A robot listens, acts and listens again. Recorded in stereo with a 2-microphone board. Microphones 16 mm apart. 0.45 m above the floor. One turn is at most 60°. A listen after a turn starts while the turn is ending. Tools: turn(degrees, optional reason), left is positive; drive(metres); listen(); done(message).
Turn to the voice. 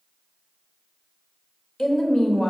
turn(degrees=45, reason="The woman speaking: about 45° left or 135° left.")
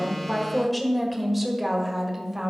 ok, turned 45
turn(degrees=-15, reason="So it is at 15° right.")
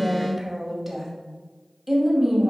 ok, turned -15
turn(degrees=-20, reason="The woman speaking is now 20° right.")
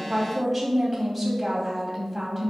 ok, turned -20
done("Facing the woman speaking.")